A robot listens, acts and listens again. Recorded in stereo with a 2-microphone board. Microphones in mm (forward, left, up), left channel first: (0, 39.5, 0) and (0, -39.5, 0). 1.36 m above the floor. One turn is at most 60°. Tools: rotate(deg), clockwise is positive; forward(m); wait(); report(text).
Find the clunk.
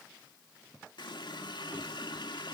wait()
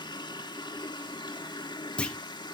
rotate(-30)
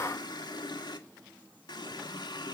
wait()
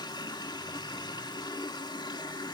report("I heard a clunk, but can't make it out now. It was about 15° right or 135° left.")